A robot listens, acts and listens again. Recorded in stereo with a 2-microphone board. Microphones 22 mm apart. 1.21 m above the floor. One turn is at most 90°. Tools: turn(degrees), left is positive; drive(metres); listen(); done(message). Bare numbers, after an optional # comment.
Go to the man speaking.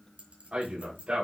# The man speaking: about 55° right or 125° right.
turn(-55)
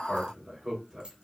drive(1.0)
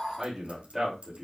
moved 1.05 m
drive(1.0)
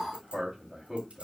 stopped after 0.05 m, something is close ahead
done("Something is in my way. I am facing the man speaking but have not reached it.")